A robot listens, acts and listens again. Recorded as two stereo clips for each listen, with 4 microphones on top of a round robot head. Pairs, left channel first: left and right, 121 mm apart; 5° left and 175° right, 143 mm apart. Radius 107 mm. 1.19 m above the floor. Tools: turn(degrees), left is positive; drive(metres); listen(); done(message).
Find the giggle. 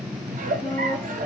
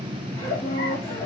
turn(degrees=-70)
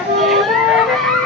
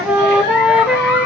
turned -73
listen()
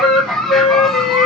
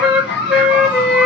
done("Facing the giggle.")